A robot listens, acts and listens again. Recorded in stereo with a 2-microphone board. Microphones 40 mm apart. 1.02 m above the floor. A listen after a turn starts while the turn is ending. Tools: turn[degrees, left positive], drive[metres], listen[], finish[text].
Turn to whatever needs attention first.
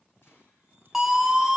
Action: turn[-30]
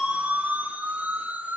Thought: So it is at 145° right.
Action: turn[-145]
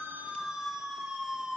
Thought: The siren is now 10° right.
Action: turn[-10]
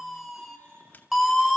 Action: finish[Facing the siren, 2 to 4 m away.]